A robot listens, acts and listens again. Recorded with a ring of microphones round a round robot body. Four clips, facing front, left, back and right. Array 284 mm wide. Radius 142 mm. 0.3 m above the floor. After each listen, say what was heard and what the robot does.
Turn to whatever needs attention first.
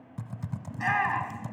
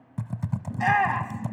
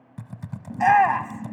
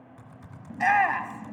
The shout: 165° right. Turn 165° right.
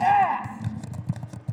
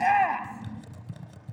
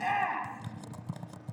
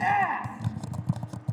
The shout is now 30° left. Turn 30° left.
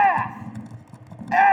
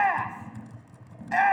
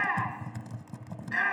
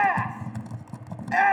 Facing the shout, 1 to 2 m away.